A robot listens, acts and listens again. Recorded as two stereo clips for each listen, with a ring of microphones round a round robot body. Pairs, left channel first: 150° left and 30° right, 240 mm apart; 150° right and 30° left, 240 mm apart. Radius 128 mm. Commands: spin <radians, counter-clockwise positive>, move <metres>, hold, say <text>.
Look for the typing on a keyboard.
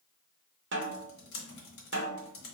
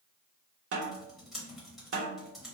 spin 2.09
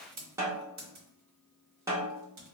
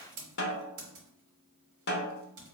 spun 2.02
say Found it: typing on a keyboard, straight ahead.